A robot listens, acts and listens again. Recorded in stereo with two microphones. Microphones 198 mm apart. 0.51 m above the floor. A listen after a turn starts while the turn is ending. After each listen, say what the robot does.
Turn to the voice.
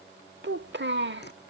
Turn 60° right.
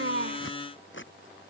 Keep listening.
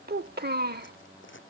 Turn 55° right.
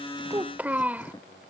Turn 10° right.
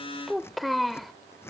Facing the child speaking.